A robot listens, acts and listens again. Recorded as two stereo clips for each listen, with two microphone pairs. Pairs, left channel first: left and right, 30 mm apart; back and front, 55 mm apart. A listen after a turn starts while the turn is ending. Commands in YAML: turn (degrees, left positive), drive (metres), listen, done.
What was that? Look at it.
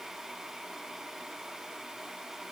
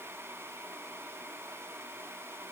listen: true
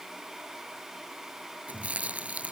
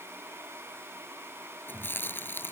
turn: -130
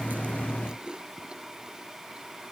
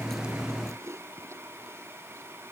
turn: -30
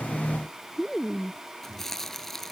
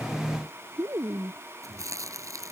turn: 15
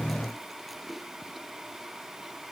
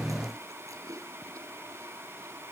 done: "Found it: chewing, straight ahead."